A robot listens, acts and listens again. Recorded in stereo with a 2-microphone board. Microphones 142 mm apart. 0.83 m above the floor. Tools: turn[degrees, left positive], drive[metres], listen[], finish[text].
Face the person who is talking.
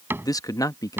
Thought: The man speaking: about 25° left or 155° left.
Action: turn[25]
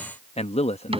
Thought: So it is at 125° left.
Action: turn[125]
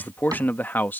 Thought: The man speaking is now 15° left.
Action: turn[15]
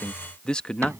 Action: finish[Facing the man speaking.]